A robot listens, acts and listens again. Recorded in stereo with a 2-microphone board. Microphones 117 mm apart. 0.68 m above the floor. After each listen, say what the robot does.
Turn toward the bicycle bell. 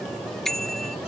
Turn 30° left.
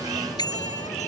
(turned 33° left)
Turn 145° left.
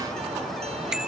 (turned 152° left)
Found it: a bicycle bell, straight ahead.